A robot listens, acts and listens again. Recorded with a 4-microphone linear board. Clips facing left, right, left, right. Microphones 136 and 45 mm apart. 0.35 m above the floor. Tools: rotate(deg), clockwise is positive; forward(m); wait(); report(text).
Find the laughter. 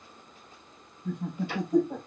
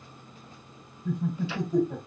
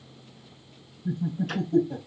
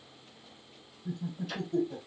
rotate(-20)
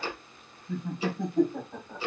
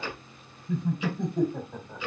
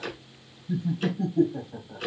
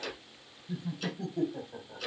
report("Facing the laughter.")